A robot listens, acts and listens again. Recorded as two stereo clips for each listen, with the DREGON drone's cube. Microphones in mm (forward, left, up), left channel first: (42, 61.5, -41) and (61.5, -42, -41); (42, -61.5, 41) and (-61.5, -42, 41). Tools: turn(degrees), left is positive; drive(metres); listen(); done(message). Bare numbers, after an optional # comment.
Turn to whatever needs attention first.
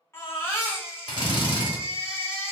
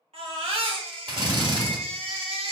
# The baby crying: 165° left.
turn(165)
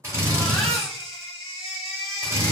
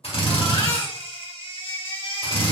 # The baby crying is now 15° left.
turn(15)
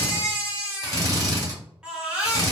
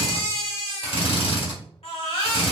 done("Facing the baby crying, 1 to 2 m away.")